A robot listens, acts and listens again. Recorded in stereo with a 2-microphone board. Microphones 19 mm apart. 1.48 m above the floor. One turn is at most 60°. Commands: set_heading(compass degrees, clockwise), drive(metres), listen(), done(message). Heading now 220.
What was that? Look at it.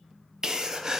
set_heading(255)
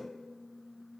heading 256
listen()
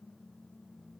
done("I heard a sneeze, but can't make it out now. It was about straight ahead or 110° right.")